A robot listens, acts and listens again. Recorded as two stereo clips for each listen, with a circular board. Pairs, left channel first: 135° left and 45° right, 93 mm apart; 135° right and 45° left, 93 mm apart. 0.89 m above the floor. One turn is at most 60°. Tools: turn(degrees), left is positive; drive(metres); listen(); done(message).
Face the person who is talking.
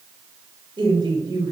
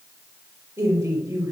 turn(degrees=-15)
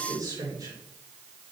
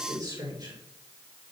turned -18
done("Found it: a woman speaking, straight ahead, 2 to 4 m away.")